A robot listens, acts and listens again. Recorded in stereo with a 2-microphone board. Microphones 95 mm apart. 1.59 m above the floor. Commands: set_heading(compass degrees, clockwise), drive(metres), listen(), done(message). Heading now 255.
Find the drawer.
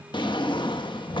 set_heading(200)
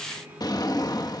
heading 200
set_heading(150)
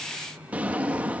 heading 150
set_heading(170)
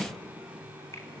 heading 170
done("Facing the drawer.")